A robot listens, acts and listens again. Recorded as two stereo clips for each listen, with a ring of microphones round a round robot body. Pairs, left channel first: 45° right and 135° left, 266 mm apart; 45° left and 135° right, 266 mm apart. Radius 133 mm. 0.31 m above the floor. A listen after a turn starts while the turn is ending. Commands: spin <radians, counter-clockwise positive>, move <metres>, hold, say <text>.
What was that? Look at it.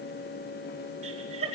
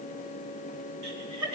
spin -2.79
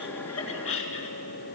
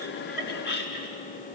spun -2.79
say Found it: laughter, straight ahead.